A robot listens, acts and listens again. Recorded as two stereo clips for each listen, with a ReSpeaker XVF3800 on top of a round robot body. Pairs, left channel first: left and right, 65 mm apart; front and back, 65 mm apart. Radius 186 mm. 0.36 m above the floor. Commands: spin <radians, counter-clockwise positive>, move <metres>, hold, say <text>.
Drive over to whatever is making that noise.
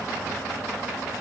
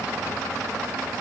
hold
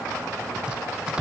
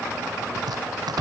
spin -2.88
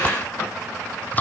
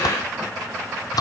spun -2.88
spin 0.44
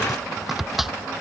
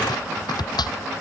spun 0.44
move 1.0
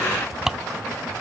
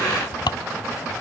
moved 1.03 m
move 1.0
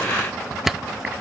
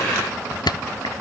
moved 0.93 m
move 1.0
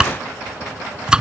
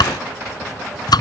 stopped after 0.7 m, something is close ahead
spin -0.17
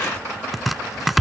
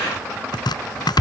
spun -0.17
say Arrived at the chopping, straight ahead.